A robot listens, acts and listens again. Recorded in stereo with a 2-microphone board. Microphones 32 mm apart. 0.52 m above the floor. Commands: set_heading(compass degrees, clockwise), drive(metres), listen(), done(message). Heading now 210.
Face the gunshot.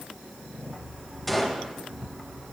set_heading(180)
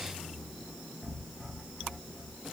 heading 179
listen()
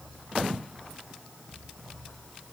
done("I heard a gunshot, but can't make it out now. It was about 25° right or 140° left.")